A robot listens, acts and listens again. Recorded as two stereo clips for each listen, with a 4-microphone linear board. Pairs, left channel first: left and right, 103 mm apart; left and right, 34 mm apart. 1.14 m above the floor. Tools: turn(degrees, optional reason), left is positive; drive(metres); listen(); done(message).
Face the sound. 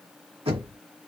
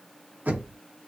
turn(degrees=-65, reason="The knocking: about 65° right or 115° right.")
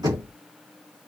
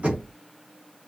turn(degrees=-40, reason="So it is at 40° right.")
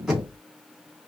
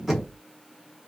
done("Found it: knocking, straight ahead.")